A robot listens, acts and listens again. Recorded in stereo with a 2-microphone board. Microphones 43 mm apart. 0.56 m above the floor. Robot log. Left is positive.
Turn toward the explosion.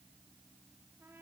cmd idle
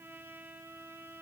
cmd idle
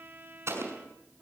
note: The explosion: about 70° right or 110° right.
cmd yaw -70
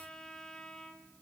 cmd idle
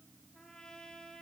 end: I heard an explosion, but can't make it out now. It was about straight ahead or 40° right.